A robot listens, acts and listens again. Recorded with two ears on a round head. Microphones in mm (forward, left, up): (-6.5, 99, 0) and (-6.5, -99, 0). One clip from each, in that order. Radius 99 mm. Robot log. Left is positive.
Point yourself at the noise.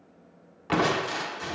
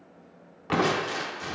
cmd yaw +30
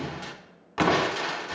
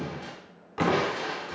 note: So it is at 140° left.
cmd yaw +140
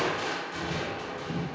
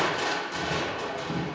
note: The crushing is now 20° right.
cmd yaw -20
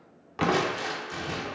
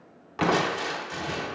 end: Facing the crushing, 1 to 2 m away.